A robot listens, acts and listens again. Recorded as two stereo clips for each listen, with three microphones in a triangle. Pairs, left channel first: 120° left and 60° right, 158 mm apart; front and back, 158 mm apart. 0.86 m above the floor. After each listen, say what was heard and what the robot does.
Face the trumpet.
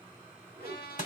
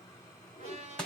The trumpet: 135° left. Turn 135° left.
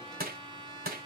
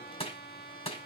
Found it: a trumpet, straight ahead.